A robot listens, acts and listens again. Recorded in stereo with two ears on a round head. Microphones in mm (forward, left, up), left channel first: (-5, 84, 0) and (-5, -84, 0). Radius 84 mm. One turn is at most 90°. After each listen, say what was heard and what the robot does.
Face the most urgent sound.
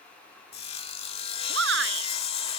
The shout: about 70° right or 110° right. Turn 70° right.
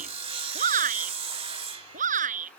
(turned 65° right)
So it is at 45° right. Turn 45° right.
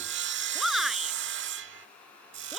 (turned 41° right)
Facing the shout.